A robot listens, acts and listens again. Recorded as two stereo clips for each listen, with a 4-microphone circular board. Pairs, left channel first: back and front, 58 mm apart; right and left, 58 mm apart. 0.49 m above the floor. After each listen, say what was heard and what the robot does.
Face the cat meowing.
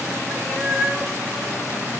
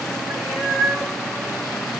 The cat meowing: 100° right. Turn 100° right.
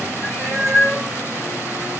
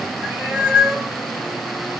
The cat meowing is now 20° left. Turn 20° left.
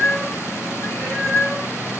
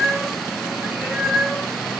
Facing the cat meowing, 2 to 4 m away.